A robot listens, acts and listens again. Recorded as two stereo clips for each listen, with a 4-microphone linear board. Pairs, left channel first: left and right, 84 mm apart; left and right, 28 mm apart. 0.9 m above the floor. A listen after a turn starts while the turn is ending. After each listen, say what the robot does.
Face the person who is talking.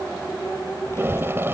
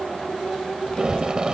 Turn 30° left.
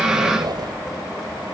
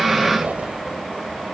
Facing the child speaking.